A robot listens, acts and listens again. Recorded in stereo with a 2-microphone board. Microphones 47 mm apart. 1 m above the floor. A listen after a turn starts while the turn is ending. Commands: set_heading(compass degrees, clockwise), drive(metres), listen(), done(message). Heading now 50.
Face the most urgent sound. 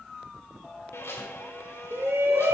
set_heading(115)
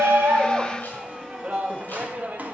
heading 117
set_heading(157)
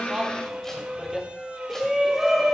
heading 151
done("Found it: a shout, straight ahead, 1 to 2 m away.")